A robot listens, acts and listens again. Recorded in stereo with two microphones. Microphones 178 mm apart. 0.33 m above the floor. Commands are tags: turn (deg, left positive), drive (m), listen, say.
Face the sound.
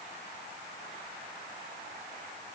<listen/>
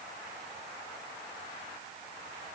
<listen/>
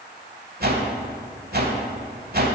<turn deg="-60"/>
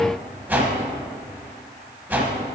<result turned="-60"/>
<turn deg="-10"/>
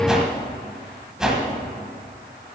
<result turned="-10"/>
<say>Found it: a whoosh, straight ahead.</say>